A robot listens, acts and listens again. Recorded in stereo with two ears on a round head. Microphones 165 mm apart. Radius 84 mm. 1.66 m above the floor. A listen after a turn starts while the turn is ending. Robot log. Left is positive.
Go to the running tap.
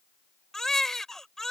cmd idle
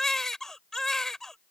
cmd idle
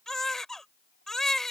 end: I can't make out a running tap, only a baby crying.